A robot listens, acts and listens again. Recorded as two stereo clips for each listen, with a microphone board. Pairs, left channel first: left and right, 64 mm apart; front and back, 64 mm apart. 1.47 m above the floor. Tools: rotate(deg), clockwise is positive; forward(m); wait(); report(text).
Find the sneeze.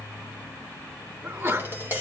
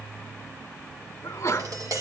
rotate(45)
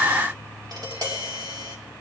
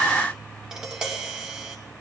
report("I heard a sneeze from this way, but can't make it out now.")